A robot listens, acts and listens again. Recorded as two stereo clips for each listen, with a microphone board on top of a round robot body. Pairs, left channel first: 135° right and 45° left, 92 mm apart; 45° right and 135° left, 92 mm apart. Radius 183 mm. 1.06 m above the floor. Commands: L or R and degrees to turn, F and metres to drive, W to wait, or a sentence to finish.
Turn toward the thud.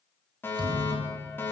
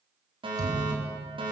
L80
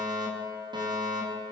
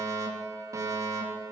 Facing where the thud came from. I can't hear it now.